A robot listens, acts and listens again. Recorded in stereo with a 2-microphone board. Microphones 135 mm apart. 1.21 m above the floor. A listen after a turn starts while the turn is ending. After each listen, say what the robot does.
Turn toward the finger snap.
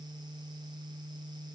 Keep listening.
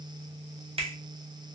Turn 50° right.
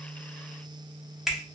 Facing the finger snap.